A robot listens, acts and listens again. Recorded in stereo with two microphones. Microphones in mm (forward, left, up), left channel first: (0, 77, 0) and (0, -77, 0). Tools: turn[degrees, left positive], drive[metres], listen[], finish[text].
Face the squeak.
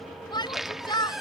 Action: turn[30]
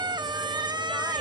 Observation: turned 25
Thought: So it is at 30° right.
Action: turn[-30]
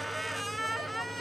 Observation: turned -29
Action: finish[Found it: a squeak, straight ahead.]